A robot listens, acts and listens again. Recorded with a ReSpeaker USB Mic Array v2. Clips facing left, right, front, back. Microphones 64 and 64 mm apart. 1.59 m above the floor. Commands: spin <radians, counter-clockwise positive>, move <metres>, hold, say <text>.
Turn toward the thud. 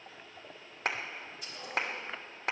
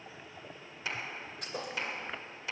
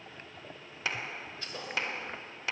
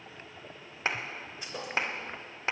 spin -1.92
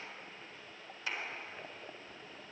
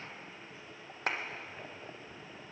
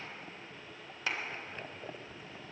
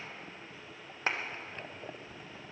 say Facing where the thud came from. I can't hear it now.